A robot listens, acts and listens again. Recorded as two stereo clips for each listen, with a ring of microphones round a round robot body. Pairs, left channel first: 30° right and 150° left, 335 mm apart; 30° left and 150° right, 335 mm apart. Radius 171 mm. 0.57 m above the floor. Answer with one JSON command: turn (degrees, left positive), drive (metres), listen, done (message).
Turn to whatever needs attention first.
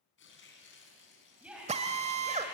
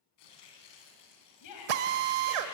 {"turn": 65}
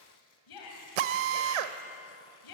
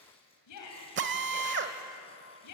{"turn": -10}
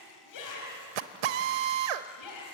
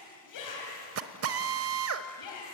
{"done": "Found it: a shout, straight ahead."}